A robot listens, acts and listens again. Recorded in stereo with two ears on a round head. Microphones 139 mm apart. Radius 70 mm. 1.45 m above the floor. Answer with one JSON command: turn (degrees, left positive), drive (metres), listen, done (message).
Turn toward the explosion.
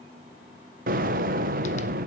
{"turn": -55}
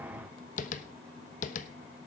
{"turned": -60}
{"listen": true}
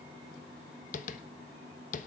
{"done": "I heard an explosion, but can't make it out now. It was about 5° left or 65° right."}